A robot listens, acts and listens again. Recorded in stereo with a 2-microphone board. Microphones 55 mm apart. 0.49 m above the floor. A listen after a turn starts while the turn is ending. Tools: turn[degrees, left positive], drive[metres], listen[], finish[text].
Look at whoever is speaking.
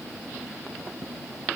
Action: listen[]
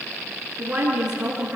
Thought: The woman speaking: about 15° right or 165° right.
Action: turn[-15]
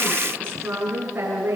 Thought: So it is at 150° right.
Action: turn[-150]
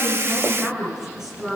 Thought: The woman speaking is now 10° right.
Action: turn[-10]
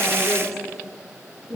Action: finish[Found it: a woman speaking, straight ahead, over 4 m away.]